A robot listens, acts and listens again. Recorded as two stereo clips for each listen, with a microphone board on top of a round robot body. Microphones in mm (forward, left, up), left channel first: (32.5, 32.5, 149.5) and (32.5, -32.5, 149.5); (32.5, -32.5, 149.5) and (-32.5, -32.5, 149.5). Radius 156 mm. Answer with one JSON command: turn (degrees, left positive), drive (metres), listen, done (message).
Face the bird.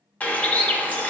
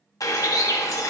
{"turn": 20}
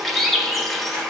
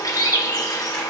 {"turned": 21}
{"done": "Found it: a bird, straight ahead, under 1 m away."}